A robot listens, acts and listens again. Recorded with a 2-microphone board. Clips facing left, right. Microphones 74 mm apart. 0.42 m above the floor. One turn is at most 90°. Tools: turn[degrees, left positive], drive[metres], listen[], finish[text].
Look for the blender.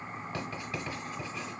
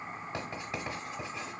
Action: listen[]
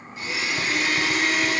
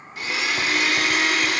Action: turn[-90]
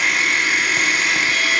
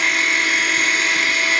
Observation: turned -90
Action: finish[Found it: a blender, straight ahead, under 1 m away.]